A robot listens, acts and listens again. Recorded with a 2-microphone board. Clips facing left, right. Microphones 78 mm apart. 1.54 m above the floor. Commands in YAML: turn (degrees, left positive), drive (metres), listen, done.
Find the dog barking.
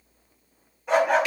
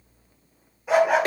turn: -30
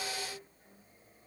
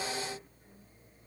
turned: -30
listen: true
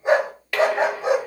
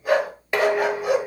turn: 30
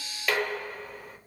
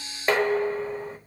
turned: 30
listen: true
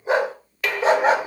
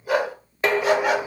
turn: 35
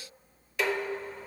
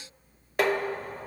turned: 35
listen: true
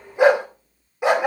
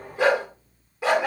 turn: 20
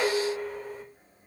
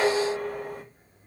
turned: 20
listen: true
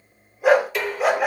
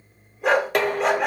done: "Facing the dog barking."